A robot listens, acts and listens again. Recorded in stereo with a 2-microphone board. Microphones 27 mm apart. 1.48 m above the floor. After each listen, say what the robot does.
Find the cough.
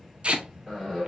Turn 30° left.
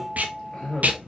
Turn 145° left.
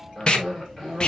Found it: a cough, straight ahead.